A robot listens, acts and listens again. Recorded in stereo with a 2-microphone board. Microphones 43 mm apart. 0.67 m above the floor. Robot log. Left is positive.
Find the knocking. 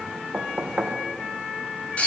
note: The knocking: about 40° right or 140° right.
cmd yaw -40
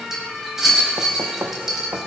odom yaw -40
note: So it is at 95° right.
cmd yaw -95
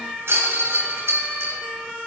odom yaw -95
cmd idle
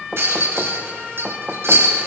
end: Facing the knocking.